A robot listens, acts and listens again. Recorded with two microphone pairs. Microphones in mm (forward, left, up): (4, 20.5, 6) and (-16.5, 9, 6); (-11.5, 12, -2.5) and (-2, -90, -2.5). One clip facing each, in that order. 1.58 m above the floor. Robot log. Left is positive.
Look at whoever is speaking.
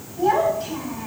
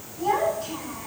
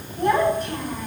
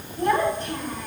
note: The child speaking: 20° left.
cmd yaw +20
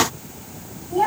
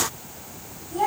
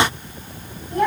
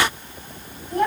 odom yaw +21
end: Found it: a child speaking, straight ahead.